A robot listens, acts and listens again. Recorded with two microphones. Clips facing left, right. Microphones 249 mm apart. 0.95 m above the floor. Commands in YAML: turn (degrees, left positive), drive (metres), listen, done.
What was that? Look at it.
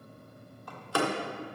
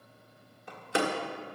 turn: -20
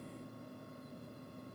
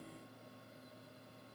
listen: true
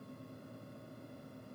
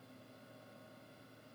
done: "I heard a door slam, but can't make it out now. It was about straight ahead or 140° right."